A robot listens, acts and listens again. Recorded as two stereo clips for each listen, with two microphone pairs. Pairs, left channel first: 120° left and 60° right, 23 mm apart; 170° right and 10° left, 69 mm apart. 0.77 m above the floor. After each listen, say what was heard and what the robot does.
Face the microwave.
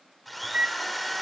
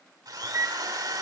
The microwave: 30° right. Turn 30° right.
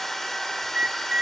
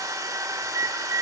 The microwave is now 20° right. Turn 20° right.
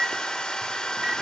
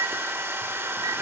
Found it: a microwave, straight ahead.